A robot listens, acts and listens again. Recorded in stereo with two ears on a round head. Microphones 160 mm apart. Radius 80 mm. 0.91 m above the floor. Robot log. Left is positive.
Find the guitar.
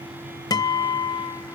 note: The guitar: about 25° left or 155° left.
cmd yaw +25
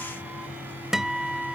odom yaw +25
end: Found it: a guitar, straight ahead.